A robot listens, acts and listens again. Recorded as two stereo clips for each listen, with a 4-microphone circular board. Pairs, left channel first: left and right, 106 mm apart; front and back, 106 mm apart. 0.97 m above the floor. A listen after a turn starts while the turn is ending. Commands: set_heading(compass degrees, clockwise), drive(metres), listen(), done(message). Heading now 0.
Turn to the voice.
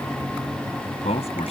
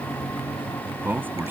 set_heading(250)
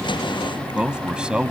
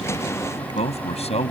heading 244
set_heading(254)
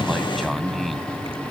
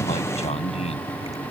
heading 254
done("Found it: a man speaking, straight ahead.")